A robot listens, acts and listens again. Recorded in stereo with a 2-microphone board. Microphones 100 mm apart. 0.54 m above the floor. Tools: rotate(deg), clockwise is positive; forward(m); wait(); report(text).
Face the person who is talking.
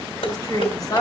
rotate(-40)
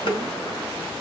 wait()
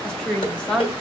rotate(-10)
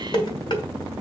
wait()
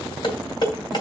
wait()
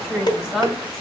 report("Found it: a woman speaking, straight ahead.")